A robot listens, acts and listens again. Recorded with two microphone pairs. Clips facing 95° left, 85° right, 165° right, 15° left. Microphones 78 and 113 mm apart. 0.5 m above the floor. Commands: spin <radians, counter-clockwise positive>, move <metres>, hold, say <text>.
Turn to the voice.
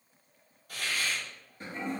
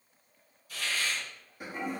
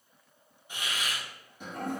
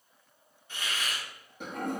hold
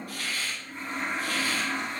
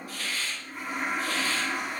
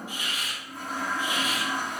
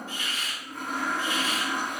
hold
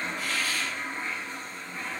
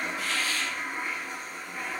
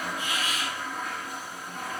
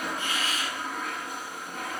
say I can't make out anyone speaking, only a toilet flushing and a hiss.